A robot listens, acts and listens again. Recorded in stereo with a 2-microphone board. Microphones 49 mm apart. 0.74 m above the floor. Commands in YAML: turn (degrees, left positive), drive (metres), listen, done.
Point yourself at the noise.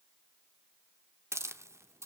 turn: -90
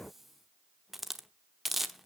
done: "Facing the hiss, under 1 m away."